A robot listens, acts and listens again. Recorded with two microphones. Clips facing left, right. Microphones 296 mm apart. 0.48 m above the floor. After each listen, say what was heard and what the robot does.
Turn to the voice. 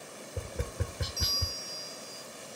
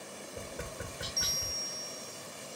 Keep listening.
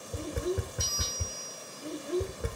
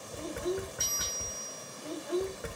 The child speaking: about 30° left or 150° left. Turn 30° left.
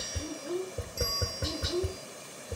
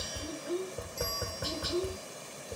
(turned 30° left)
So it is at 110° left. Turn 110° left.
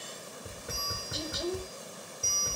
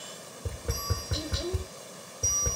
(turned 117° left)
Found it: a child speaking, straight ahead, 1 to 2 m away.